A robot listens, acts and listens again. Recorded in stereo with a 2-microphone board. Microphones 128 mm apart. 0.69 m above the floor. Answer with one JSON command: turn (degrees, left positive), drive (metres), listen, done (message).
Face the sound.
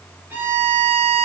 {"turn": -15}
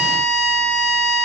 {"done": "Found it: a violin, straight ahead."}